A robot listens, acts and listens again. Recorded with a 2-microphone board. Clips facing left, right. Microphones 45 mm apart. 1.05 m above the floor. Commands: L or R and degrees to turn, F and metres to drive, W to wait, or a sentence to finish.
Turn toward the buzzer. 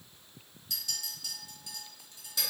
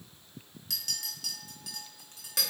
W
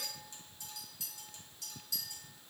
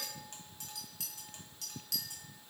W
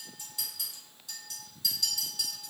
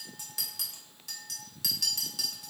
I can't make out a buzzer, only a clink.